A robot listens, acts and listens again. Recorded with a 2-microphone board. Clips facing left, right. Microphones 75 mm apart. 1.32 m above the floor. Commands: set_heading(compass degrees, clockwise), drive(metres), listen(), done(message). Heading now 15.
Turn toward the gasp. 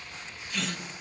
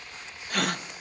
set_heading(70)
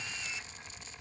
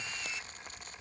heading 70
listen()
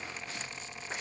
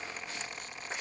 done("I heard a gasp, but can't make it out now. It was about straight ahead or 70° right.")